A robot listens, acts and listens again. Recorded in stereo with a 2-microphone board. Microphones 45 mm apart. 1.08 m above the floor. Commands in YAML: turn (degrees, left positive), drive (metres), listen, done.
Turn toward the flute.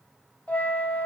turn: 35
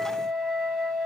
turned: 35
done: "Facing the flute."